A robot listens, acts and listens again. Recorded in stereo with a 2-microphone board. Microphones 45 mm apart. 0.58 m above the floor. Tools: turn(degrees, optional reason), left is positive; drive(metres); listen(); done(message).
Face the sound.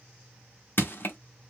turn(degrees=50, reason="The crushing: about 50° left or 130° left.")
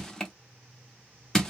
turn(degrees=15, reason="So it is at 15° left.")
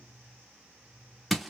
done("Facing the crushing.")